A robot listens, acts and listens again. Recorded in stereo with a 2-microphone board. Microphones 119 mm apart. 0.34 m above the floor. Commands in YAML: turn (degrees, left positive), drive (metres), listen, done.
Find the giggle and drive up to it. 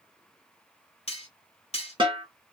listen: true
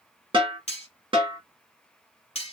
listen: true
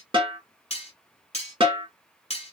done: "I can't make out a giggle, only cutlery clinking and a snare drum."